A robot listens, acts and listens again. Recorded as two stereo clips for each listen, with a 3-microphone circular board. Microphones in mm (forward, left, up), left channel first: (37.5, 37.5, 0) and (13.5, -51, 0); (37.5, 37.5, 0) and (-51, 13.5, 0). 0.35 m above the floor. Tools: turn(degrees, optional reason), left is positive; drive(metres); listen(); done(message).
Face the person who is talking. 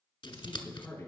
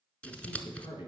turn(degrees=15, reason="The man speaking: 15° left.")
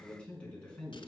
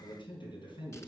done("Facing the man speaking.")